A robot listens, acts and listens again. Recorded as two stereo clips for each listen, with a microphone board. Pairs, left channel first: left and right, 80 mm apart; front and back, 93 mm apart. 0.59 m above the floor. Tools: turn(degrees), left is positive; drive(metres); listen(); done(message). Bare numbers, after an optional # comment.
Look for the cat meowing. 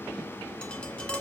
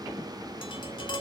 listen()
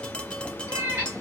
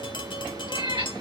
# The cat meowing: 155° right.
turn(-155)
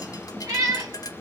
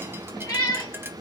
# The cat meowing is now 45° right.
turn(-45)
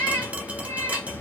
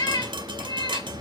# The cat meowing is now 30° left.
turn(30)
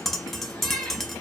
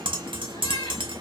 # The cat meowing is now 10° left.
turn(10)
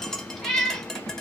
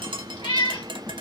done("Found it: a cat meowing, straight ahead.")